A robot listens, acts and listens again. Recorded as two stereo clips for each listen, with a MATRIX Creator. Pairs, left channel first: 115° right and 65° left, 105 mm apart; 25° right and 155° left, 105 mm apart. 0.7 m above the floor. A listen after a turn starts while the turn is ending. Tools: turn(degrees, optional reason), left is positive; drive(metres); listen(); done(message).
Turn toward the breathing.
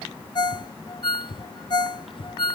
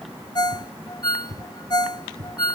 turn(degrees=-145, reason="The breathing: 145° right.")
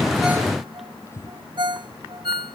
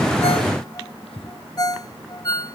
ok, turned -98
turn(degrees=-50, reason="The breathing is now 50° right.")
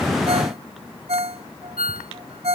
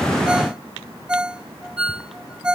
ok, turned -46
listen()
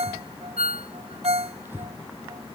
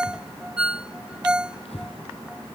done("Found it: breathing, straight ahead.")